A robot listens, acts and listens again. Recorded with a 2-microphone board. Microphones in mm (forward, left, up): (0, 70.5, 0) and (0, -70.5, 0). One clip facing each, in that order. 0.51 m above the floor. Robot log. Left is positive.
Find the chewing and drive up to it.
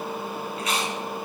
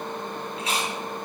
note: The chewing: about 30° right or 150° right.
cmd yaw -30
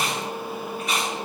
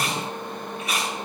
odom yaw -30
cmd fwd 1.0
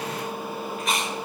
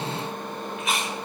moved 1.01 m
cmd fwd 1.0
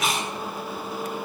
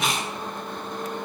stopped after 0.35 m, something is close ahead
end: Arrived at the chewing, straight ahead.